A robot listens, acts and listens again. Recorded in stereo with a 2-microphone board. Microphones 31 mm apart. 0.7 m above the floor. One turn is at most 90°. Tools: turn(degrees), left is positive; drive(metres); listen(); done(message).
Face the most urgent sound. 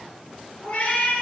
listen()
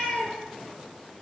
listen()
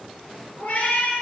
done("I can't make out anything urgent, only a cat meowing.")